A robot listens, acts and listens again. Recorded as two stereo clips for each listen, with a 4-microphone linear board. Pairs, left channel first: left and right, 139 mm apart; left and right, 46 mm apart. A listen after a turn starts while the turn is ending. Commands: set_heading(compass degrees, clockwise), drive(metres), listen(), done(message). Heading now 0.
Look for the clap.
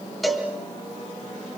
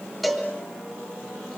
listen()
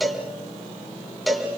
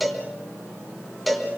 listen()
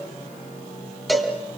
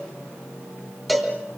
done("I can't make out a clap to turn to.")